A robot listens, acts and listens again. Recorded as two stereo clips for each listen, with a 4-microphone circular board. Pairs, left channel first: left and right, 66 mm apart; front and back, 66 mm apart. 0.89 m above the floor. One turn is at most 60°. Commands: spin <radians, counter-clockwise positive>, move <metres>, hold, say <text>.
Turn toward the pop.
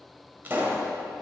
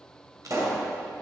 spin -1.05
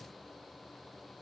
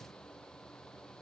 spin -1.05
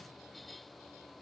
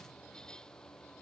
spin -0.52
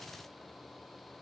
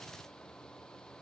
say Facing where the pop came from. I can't hear it now.